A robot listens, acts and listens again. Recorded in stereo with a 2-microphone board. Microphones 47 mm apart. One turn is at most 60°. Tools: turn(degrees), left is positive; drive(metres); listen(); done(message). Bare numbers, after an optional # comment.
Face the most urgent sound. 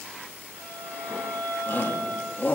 # The shout: about 40° left or 140° left.
turn(40)
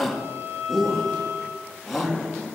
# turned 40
done("Found it: a shout, straight ahead.")